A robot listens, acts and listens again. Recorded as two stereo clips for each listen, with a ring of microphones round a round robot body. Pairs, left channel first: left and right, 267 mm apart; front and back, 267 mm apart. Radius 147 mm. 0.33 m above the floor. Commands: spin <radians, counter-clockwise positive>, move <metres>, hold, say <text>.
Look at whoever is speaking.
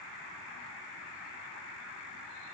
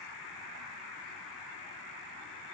hold
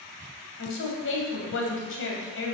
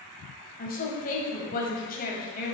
spin 0.96
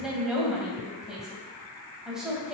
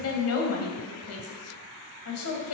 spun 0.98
say Facing the woman speaking, 1 to 2 m away.